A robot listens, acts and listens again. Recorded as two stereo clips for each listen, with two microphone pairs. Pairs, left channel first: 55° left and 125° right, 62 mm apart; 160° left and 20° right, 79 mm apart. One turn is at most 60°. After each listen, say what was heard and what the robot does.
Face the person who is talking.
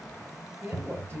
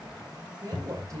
The woman speaking: 70° right. Turn 60° right.
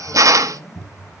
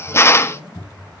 Nothing new. It was at 10° right. Turn 10° right.
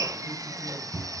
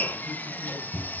Keep listening.
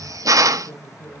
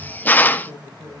The woman speaking is now 10° left. Turn 10° left.
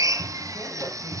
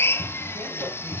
Keep listening.
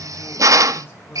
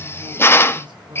Facing the woman speaking, over 4 m away.